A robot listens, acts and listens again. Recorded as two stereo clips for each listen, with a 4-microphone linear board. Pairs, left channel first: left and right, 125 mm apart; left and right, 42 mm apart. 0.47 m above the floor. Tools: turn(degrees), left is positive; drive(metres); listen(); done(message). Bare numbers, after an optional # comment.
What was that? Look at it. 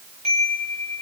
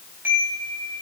# The chime: about 60° right or 120° right.
turn(-60)
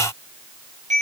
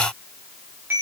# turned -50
# So it is at 70° right.
turn(-70)
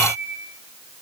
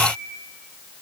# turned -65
done("Facing the chime.")